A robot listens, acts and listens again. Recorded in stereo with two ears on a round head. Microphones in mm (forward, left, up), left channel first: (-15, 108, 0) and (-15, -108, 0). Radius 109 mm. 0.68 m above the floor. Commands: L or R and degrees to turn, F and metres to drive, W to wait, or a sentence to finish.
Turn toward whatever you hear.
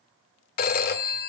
L40
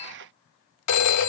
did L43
L95
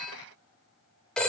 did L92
Found it: a phone ringing, straight ahead.